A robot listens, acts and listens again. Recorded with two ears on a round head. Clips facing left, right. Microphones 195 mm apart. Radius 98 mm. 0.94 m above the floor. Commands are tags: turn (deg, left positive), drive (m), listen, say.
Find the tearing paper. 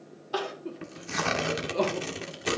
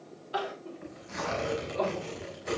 <turn deg="90"/>
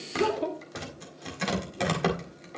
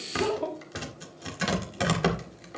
<say>Found it: tearing paper, straight ahead.</say>